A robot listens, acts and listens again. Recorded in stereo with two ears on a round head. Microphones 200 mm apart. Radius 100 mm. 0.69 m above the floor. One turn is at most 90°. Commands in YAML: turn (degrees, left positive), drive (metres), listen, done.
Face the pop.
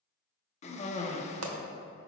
turn: -90
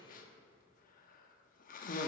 done: "Facing where the pop came from. I can't hear it now."